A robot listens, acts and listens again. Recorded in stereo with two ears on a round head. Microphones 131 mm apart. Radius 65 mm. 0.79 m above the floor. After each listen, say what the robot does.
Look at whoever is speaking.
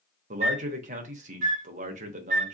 Turn 55° right.
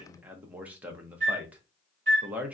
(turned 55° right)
Turn 10° right.
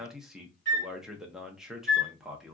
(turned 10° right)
Facing the man speaking.